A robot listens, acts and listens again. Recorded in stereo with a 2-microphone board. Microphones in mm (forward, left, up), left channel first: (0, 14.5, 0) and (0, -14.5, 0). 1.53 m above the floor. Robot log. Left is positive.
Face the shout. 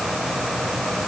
cmd idle
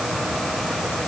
cmd idle
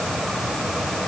end: I can't make out a shout to turn to.